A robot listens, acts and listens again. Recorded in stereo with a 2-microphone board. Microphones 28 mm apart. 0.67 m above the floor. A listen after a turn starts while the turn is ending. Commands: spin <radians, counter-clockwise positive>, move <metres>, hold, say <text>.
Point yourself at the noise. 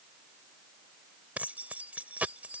spin -1.31
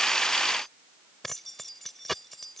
say Facing the keys jangling.